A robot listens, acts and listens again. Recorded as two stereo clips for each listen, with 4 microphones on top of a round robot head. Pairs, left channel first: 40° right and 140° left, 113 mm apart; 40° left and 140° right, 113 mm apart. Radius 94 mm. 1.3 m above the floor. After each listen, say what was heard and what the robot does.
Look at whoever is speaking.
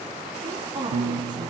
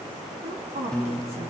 The woman speaking: 165° right. Turn 165° right.
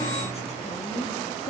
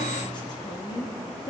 The woman speaking is now 15° right. Turn 15° right.
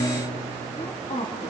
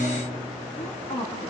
Facing the woman speaking, 2 to 4 m away.